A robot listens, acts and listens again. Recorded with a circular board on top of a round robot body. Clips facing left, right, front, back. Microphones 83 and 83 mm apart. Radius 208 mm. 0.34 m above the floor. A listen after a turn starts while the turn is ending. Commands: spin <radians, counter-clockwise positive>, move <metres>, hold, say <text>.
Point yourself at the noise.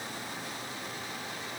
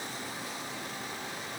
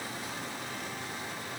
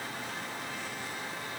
hold
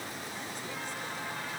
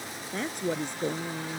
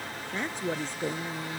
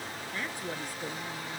spin -1.13
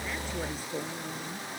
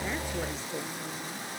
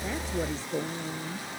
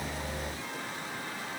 spin 0.17
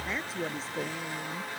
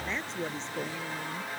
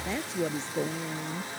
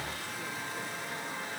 say Facing the woman speaking.